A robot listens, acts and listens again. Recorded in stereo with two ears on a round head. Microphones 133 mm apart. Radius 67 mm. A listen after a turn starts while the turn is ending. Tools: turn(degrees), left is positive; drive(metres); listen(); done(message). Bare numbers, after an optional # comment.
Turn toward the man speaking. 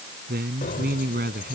# The man speaking: about 65° right or 115° right.
turn(-65)
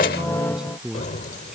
done("Found it: a man speaking, straight ahead.")